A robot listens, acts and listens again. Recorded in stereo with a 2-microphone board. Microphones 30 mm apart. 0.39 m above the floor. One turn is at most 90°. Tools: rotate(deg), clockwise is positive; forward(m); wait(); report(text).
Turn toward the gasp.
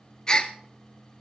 rotate(-25)
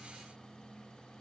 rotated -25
wait()
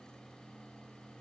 report("I heard a gasp, but can't make it out now. It was about straight ahead or 130° left.")